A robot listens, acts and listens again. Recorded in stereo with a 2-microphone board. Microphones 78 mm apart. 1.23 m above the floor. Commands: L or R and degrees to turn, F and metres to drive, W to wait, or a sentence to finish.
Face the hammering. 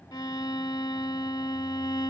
W
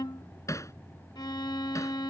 L40
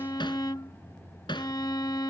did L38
L100
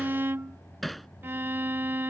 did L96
Facing the hammering.